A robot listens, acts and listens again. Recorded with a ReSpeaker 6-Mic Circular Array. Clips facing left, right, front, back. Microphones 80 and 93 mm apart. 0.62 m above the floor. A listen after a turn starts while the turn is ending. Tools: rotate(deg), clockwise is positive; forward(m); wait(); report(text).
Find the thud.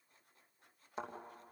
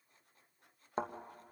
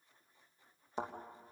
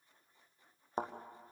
rotate(135)
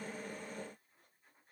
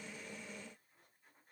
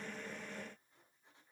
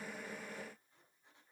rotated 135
report("I heard a thud from this way, but can't make it out now.")